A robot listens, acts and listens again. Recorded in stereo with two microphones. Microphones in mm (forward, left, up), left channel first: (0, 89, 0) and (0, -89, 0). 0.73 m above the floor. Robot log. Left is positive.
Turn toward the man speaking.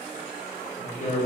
note: The man speaking: about 45° left or 135° left.
cmd yaw +45
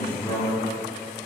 note: So it is at 20° left.
cmd yaw +20
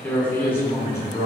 note: The man speaking is now 20° left.
cmd yaw +20
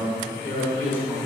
note: The man speaking is now 15° left.
cmd yaw +15
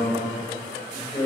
note: The man speaking is now 15° left.
cmd yaw +15
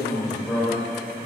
end: Found it: a man speaking, straight ahead, 2 to 4 m away.